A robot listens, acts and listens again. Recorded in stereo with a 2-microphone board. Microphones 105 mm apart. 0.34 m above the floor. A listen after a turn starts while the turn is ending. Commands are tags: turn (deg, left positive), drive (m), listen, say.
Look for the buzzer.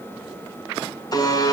<turn deg="40"/>
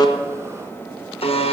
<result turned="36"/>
<turn deg="105"/>
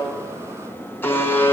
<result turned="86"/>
<turn deg="20"/>
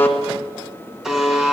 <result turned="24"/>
<say>Found it: a buzzer, straight ahead, 1 to 2 m away.</say>